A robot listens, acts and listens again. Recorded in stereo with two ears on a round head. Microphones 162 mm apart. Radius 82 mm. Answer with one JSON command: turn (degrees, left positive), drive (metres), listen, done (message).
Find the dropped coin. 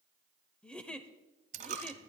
{"turn": -40}
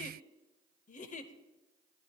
{"listen": true}
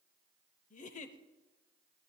{"done": "I heard a dropped coin, but can't make it out now. It was about straight ahead or 100° right."}